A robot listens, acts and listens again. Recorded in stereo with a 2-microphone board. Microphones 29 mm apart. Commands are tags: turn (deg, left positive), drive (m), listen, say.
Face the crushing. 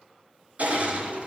<turn deg="-60"/>
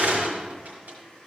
<turn deg="-60"/>
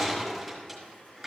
<say>Facing the crushing, over 4 m away.</say>